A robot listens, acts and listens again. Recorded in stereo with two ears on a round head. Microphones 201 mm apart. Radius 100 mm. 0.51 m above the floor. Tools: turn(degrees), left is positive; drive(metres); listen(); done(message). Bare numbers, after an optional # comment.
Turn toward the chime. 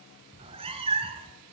listen()
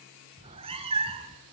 listen()
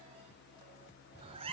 done("I can't make out a chime, only a cat meowing.")